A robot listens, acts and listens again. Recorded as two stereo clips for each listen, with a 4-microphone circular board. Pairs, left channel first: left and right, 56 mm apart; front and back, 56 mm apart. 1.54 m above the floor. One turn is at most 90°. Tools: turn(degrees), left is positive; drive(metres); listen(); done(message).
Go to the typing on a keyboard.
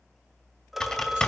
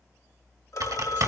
turn(degrees=90)
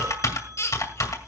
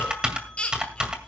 turn(degrees=90)
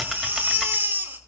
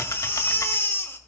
drive(metres=1.0)
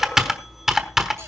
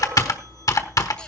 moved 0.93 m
turn(degrees=-10)
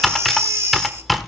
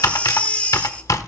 drive(metres=1.0)
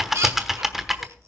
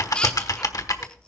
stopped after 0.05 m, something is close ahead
done("Arrived at the typing on a keyboard, straight ahead.")